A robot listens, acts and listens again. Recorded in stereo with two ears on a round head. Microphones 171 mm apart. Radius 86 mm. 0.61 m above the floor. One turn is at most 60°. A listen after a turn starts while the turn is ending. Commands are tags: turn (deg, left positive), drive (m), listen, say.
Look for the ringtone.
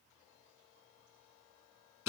<listen/>
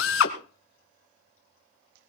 <listen/>
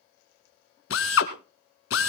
<say>I can't make out a ringtone, only a drill.</say>